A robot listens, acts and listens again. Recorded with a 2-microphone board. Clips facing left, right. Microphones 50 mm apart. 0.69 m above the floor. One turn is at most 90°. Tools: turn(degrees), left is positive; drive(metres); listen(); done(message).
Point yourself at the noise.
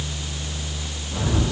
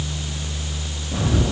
turn(degrees=-60)
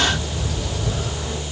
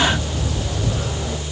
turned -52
turn(degrees=-65)
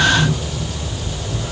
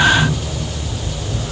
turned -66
done("Facing the bird, over 4 m away.")